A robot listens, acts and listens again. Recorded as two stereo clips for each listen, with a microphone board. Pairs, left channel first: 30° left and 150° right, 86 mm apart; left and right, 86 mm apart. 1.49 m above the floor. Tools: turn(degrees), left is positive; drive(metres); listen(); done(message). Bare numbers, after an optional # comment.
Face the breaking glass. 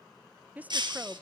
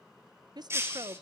# The breaking glass: 145° right.
turn(-145)
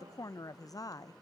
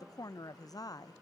done("I heard breaking glass from this way, but can't make it out now.")